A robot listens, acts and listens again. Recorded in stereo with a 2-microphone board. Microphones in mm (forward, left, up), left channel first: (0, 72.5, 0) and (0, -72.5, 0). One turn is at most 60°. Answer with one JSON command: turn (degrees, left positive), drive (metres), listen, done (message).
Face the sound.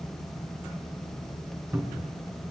{"turn": -30}
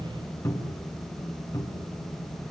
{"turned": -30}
{"turn": 20}
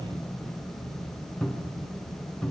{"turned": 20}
{"done": "Found it: a cupboard door, straight ahead."}